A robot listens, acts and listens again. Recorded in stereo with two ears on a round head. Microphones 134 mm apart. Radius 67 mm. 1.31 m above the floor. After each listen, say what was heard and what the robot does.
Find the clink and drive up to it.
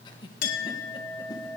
The clink: about 60° left or 120° left. Turn 60° left.
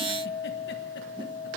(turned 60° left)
So it is at 60° left. Turn 60° left.
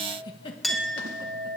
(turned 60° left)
Drive 1.0 m forward.
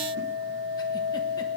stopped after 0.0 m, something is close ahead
Blocked. The clink is further on, straight ahead.